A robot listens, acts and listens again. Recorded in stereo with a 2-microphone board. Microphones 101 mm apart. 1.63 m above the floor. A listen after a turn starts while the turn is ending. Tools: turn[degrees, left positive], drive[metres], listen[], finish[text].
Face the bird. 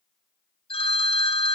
Action: listen[]
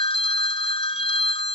Action: listen[]
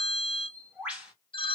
Action: turn[-30]
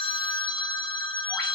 Action: listen[]
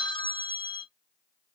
Action: listen[]
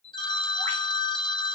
Thought: So it is at 20° left.
Action: turn[20]
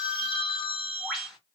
Action: finish[Found it: a bird, straight ahead, 1 to 2 m away.]